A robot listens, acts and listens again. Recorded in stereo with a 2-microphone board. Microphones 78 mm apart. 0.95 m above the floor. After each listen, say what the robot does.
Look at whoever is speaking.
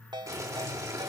Keep listening.
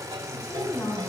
Turn 50° left.
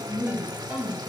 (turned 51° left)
Turn 80° left.
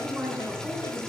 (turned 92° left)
Turn 15° right.
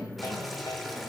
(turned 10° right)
Facing the woman speaking.